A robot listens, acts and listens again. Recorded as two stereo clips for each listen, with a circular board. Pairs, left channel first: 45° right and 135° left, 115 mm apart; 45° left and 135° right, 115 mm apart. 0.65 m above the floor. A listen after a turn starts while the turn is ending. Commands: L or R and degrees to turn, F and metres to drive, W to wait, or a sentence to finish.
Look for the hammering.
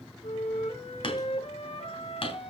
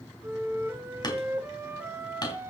Found it: hammering, straight ahead.